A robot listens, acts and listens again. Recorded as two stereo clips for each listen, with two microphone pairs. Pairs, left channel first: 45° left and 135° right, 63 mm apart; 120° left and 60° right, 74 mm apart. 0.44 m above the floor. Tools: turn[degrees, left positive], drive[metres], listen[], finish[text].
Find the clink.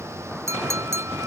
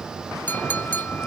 Thought: The clink: 175° right.
Action: turn[-175]
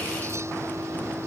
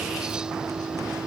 Action: listen[]
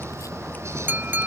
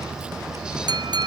Thought: The clink is now 75° right.
Action: turn[-75]
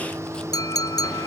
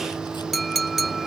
Thought: The clink is now 30° left.
Action: turn[30]
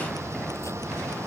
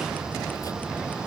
Action: listen[]
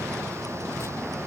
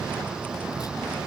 Action: listen[]
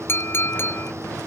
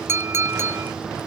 Action: finish[Found it: a clink, straight ahead.]